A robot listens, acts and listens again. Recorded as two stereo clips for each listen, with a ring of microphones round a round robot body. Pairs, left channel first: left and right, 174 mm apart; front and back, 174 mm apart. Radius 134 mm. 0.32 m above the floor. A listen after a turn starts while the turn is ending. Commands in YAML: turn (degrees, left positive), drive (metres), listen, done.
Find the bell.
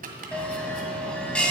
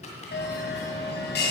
done: "Found it: a bell, straight ahead, 2 to 4 m away."